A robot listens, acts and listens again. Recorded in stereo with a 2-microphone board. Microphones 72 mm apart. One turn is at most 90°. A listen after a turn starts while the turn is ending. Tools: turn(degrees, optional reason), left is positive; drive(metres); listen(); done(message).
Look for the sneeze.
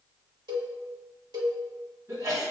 turn(degrees=-50, reason="The sneeze: about 50° right or 130° right.")
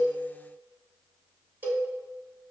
listen()
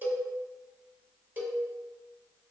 done("I heard a sneeze, but can't make it out now. It was about straight ahead or 80° right.")